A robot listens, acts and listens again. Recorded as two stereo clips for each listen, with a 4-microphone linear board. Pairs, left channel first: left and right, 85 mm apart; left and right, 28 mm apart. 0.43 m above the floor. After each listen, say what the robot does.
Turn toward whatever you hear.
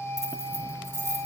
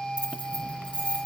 Turn 40° right.
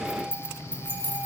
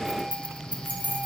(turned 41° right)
Turn 115° right.
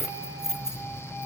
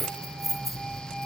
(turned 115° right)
Found it: keys jangling, straight ahead, 1 to 2 m away.